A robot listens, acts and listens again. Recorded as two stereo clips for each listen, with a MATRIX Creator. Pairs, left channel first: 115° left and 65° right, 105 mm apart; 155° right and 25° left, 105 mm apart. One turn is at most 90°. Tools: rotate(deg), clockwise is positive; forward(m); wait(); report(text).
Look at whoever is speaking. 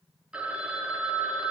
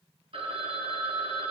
wait()
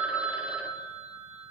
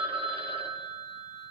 wait()
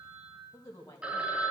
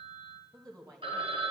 rotate(-60)
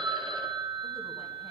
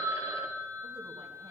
wait()
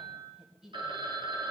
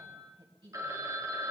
rotate(-20)
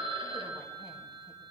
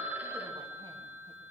wait()
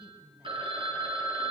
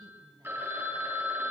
report("Found it: a woman speaking, straight ahead, 2 to 4 m away.")